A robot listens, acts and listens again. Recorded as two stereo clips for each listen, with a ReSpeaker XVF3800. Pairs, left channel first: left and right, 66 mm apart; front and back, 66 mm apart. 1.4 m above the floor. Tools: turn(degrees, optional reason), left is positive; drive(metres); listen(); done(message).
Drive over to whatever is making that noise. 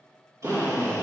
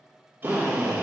turn(degrees=-125, reason="The drill: 125° right.")
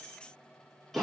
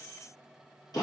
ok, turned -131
drive(metres=1.0)
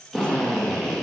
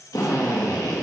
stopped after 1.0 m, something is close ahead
turn(degrees=10, reason="The drill is now 10° left.")
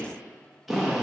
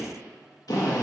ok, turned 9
done("I am next to the drill.")